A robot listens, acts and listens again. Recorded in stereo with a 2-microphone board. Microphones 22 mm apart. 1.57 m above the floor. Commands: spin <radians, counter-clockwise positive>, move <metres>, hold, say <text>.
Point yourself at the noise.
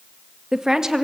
spin -0.44
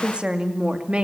spin -2.27
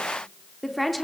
say Found it: a woman speaking, straight ahead, 2 to 4 m away.